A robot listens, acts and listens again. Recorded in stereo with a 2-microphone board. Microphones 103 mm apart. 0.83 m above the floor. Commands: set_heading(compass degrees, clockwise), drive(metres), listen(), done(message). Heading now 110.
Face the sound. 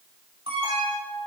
set_heading(180)
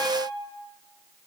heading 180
done("Found it: an alarm, straight ahead.")